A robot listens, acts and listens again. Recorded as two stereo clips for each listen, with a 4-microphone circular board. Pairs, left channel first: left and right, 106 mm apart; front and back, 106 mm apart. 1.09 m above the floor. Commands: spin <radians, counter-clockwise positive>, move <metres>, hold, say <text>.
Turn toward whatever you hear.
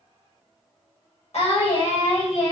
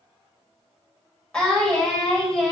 spin 1.48
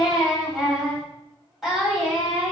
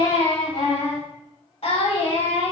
say Found it: singing, straight ahead.